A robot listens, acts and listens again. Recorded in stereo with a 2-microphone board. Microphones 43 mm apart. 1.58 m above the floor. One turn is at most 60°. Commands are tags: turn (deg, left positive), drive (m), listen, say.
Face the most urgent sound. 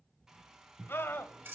<turn deg="60"/>
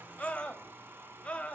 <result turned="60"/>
<turn deg="30"/>
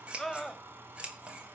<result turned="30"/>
<say>Facing the scream.</say>